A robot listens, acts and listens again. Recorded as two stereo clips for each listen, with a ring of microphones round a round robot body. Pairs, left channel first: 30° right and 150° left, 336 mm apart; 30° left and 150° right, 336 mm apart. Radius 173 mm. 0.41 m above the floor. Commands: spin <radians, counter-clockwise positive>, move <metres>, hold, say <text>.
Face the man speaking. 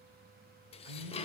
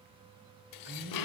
spin 2.97
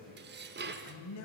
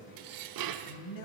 spin 0.17
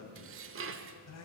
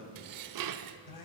spin 0.17
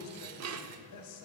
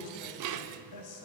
say Facing the man speaking.